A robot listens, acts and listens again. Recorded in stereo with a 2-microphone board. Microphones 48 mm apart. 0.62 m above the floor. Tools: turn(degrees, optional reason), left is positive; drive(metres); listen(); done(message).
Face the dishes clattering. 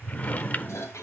turn(degrees=90)
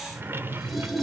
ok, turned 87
done("Facing the dishes clattering, 2 to 4 m away.")